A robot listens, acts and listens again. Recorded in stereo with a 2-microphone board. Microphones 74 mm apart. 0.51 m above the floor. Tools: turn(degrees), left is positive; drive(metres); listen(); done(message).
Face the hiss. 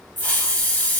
turn(degrees=25)
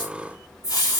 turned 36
turn(degrees=120)
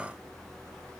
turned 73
turn(degrees=45)
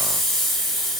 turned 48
done("Facing the hiss, under 1 m away.")